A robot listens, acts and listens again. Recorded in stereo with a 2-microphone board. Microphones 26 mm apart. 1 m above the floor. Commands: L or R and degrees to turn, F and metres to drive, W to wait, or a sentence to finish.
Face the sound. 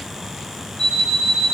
L40
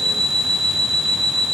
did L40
L100
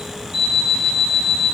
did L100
R30
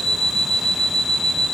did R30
L15
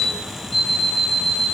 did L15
Found it: an alarm clock, straight ahead.